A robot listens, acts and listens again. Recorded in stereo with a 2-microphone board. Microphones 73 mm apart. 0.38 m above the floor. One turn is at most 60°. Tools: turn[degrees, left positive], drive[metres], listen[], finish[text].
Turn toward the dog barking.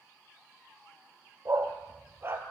Thought: The dog barking: about 35° right or 145° right.
Action: turn[-35]
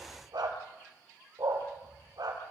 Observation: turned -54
Thought: So it is at 105° right.
Action: turn[-60]
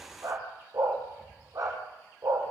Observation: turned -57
Thought: The dog barking is now 55° right.
Action: turn[-55]
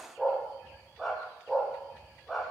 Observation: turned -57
Action: finish[Facing the dog barking, over 4 m away.]